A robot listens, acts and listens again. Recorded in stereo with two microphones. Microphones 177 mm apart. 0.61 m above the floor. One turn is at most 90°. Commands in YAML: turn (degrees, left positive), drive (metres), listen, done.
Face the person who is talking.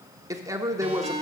turn: -20
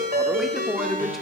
done: "Facing the man speaking, 1 to 2 m away."